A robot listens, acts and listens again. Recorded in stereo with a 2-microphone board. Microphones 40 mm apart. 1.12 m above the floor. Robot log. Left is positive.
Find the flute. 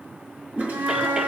note: The flute: about 70° right or 110° right.
cmd yaw -70
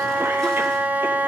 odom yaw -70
note: So it is at 40° right.
cmd yaw -40
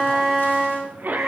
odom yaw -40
end: Facing the flute.